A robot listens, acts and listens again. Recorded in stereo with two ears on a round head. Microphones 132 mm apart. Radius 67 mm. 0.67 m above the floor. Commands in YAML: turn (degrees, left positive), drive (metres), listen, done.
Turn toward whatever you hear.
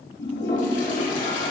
turn: 55
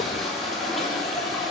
done: "Facing the toilet flushing."